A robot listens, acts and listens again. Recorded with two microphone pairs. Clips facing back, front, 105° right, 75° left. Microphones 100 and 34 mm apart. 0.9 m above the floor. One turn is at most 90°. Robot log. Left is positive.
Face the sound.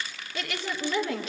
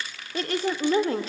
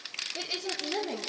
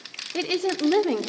note: The woman speaking: 55° left.
cmd yaw +55
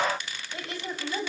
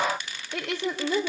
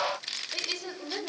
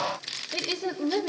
end: Facing the woman speaking.